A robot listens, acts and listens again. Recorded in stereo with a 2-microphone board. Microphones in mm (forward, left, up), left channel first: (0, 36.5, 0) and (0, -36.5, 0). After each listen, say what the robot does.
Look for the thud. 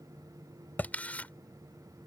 Turn 25° left.
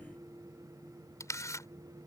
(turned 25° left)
Keep listening.
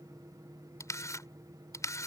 I heard a thud, but can't make it out now. It was about straight ahead or 130° left.